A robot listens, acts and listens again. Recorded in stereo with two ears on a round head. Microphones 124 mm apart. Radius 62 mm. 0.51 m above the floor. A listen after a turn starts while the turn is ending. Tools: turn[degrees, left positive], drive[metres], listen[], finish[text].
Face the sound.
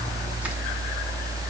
Action: listen[]
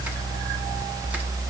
Action: listen[]
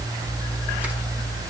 Action: finish[I can't make out anything to turn to.]